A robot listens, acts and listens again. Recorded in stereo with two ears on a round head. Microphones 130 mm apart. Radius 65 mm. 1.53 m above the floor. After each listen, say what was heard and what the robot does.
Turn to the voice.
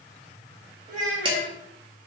The child speaking: about 55° right or 125° right. Turn 55° right.
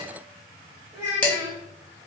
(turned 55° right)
So it is at 25° right. Turn 25° right.
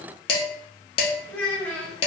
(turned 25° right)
The child speaking is now 10° left. Turn 10° left.
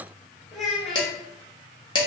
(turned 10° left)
Found it: a child speaking, straight ahead.